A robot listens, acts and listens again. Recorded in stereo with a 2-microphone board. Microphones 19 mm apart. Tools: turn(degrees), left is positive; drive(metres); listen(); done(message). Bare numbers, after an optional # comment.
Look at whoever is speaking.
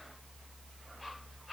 listen()
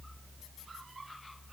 listen()
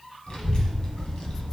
# The child speaking: about 65° left or 115° left.
turn(65)
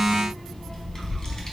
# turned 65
# So it is at 40° left.
turn(40)
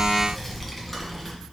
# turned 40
# The child speaking is now 10° left.
turn(10)
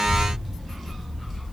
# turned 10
done("Facing the child speaking, 1 to 2 m away.")